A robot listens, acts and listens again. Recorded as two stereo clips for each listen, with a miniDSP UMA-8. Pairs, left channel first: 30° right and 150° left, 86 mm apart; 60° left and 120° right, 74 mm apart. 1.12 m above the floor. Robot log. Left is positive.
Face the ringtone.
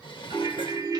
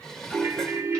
note: The ringtone: 175° right.
cmd yaw -175
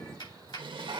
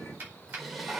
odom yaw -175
cmd idle
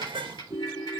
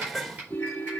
end: Facing the ringtone.